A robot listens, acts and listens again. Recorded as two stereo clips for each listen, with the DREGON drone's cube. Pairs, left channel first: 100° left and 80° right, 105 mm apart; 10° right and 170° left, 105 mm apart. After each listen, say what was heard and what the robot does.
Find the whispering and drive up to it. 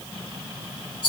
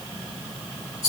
Keep listening.
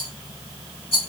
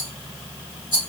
Keep listening.
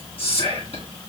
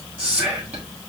The whispering: 90° left. Turn 90° left.
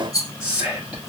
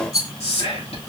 Drive 1.0 m forward.
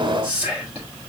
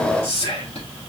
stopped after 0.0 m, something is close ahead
Something is in my way. I am facing the whispering but have not reached it.